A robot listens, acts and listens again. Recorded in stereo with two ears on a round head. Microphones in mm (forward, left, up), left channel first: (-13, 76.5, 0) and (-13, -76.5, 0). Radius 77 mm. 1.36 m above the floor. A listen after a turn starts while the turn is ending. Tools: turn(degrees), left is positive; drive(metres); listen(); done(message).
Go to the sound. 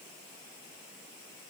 listen()
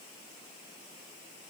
listen()
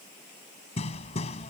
turn(degrees=40)
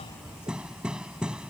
drive(metres=1.0)
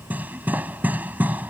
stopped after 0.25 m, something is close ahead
turn(degrees=-10)
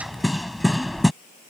done("Something is in my way. I am facing the hammering but have not reached it.")